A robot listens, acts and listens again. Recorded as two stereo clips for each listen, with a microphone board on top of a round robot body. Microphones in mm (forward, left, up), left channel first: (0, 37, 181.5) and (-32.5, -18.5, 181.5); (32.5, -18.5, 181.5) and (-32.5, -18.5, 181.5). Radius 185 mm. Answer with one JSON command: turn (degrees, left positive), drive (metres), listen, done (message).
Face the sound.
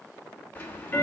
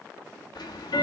{"done": "Found it: ticking, straight ahead."}